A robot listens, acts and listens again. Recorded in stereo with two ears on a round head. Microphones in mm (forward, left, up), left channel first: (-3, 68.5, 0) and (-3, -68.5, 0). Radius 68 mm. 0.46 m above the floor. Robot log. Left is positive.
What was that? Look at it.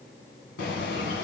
cmd yaw +90
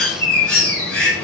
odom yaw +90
end: Found it: a bird, straight ahead.